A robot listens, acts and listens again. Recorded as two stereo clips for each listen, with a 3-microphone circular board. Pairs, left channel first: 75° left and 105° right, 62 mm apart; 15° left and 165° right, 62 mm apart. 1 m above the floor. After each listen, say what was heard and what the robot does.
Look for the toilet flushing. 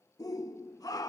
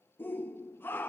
Keep listening.
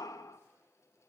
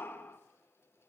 Keep listening.
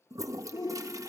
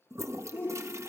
The toilet flushing: 125° right. Turn 125° right.
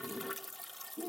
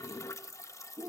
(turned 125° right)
The toilet flushing is now 15° right. Turn 15° right.
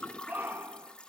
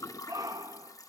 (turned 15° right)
Facing the toilet flushing, 1 to 2 m away.